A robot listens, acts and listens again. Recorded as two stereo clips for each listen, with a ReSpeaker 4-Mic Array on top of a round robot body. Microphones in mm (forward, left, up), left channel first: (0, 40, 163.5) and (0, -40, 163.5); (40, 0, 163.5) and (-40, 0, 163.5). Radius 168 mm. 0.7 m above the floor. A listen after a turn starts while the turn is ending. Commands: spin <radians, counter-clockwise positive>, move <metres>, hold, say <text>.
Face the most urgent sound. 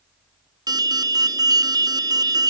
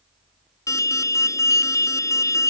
spin -0.87
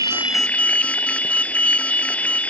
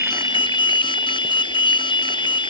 spin 0.26
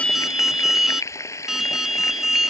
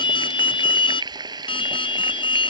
say Facing the alarm.